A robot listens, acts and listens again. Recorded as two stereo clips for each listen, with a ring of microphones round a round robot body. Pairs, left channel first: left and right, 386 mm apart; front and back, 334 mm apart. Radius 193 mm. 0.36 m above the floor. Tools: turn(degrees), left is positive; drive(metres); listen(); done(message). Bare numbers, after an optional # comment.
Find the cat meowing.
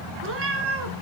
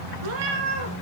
# The cat meowing: 145° right.
turn(-145)
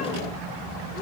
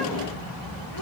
listen()
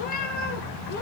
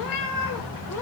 # The cat meowing is now 20° left.
turn(20)
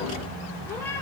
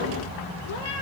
listen()
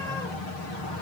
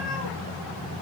listen()
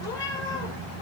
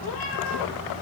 done("Facing where the cat meowing came from. I can't hear it now.")